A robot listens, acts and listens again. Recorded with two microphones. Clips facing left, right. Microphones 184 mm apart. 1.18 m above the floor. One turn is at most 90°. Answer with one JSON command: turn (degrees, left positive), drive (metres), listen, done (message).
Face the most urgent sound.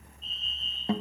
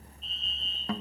{"turn": -65}
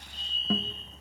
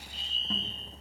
{"turn": -20}
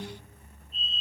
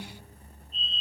{"done": "Found it: a fire alarm, straight ahead."}